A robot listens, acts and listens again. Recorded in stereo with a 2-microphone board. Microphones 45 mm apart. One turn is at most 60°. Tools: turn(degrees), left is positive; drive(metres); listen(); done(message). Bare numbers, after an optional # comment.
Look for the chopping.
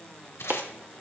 # The chopping: about 40° right or 140° right.
turn(-40)
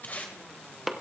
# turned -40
done("Facing the chopping, under 1 m away.")